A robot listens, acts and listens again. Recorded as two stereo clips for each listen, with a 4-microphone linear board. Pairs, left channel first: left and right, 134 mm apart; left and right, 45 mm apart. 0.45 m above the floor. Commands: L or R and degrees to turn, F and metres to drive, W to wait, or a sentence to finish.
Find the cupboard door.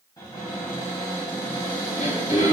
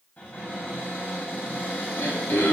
L30
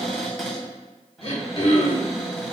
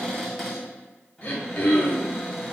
Found it: a cupboard door, straight ahead.